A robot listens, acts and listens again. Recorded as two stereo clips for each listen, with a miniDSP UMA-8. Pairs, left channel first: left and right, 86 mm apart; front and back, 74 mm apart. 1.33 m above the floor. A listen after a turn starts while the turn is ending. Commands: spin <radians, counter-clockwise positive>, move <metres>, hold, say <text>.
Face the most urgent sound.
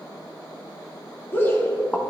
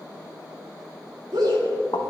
spin 2.62
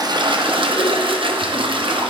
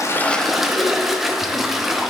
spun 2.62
hold
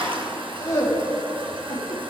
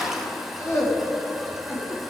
spin 0.79
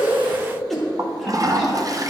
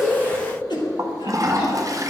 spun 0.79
say Found it: a shout, straight ahead.